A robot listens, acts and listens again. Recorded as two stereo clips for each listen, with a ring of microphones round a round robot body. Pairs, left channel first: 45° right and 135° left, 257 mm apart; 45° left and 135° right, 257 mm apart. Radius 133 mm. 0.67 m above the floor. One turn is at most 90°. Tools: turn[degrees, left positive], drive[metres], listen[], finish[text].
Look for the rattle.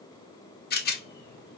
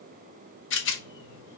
Action: finish[Facing the rattle, under 1 m away.]